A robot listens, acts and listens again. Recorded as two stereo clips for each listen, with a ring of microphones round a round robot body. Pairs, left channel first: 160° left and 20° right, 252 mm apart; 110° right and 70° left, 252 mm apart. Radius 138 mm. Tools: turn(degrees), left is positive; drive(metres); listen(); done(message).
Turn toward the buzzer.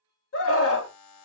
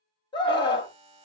turn(degrees=135)
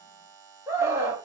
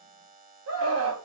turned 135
turn(degrees=10)
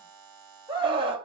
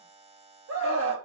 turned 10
done("Found it: a buzzer, straight ahead, under 1 m away.")